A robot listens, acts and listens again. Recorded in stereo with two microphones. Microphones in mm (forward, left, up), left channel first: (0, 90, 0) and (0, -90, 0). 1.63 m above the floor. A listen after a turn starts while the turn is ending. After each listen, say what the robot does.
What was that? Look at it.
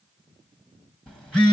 Turn 30° left.
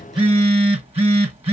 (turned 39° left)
Turn 35° right.
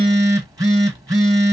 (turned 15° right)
Turn 20° right.
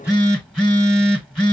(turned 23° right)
Facing the phone buzzing.